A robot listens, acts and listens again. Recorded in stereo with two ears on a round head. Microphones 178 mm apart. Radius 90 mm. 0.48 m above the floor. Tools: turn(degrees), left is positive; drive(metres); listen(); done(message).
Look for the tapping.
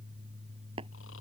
turn(degrees=-30)
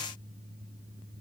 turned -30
listen()
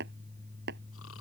turn(degrees=-120)
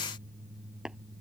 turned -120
done("Found it: tapping, straight ahead.")